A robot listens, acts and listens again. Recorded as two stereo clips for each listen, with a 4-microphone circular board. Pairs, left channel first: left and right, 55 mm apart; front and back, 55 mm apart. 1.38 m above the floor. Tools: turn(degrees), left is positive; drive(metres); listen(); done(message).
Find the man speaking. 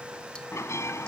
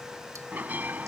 listen()
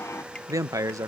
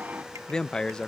turn(degrees=-75)
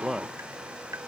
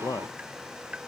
done("Facing the man speaking.")